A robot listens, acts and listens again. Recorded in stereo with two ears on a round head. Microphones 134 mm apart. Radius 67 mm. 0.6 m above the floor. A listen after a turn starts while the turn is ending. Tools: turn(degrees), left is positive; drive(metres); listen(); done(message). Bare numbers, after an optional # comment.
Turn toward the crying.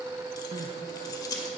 # The crying: about 50° right or 130° right.
turn(-50)
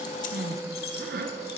# So it is at 75° right.
turn(-75)
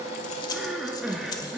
done("Found it: crying, straight ahead, 1 to 2 m away.")